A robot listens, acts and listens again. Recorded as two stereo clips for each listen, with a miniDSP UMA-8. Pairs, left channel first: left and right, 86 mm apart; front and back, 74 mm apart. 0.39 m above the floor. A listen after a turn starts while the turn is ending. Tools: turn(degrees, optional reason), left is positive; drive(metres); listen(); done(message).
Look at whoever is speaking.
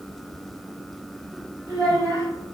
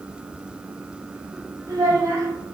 turn(degrees=-145, reason="The child speaking: 145° right.")
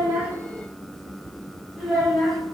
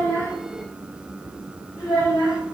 done("Found it: a child speaking, straight ahead, 1 to 2 m away.")